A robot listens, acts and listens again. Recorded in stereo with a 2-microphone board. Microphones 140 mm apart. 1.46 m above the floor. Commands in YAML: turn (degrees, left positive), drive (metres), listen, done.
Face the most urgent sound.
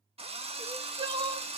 turn: -35
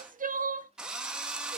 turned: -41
turn: -105
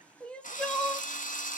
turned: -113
turn: 10
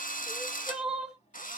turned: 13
done: "Found it: crying, straight ahead."